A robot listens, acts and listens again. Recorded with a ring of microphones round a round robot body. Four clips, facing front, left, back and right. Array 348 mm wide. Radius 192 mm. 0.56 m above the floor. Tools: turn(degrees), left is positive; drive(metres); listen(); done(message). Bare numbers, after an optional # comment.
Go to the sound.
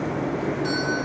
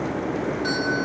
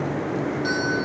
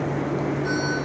# The doorbell: 95° left.
turn(95)
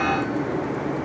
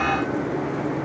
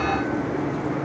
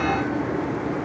listen()
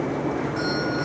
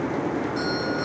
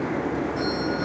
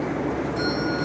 # The doorbell is now 15° left.
turn(15)
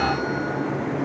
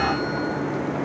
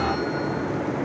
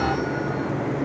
listen()
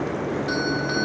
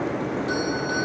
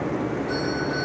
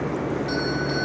drive(1.0)
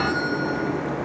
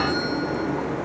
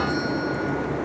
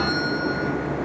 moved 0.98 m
# The doorbell is now 10° right.
turn(-10)
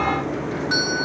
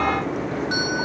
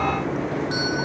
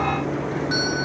drive(1.0)
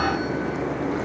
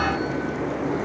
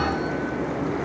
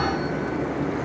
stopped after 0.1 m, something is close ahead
listen()
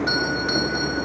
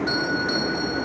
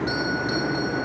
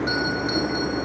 done("Arrived at the doorbell, straight ahead.")